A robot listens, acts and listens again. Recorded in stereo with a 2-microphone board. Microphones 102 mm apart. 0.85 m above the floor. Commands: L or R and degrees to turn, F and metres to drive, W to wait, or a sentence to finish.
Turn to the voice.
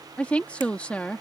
L30
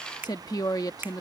L135
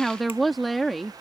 Facing the woman speaking.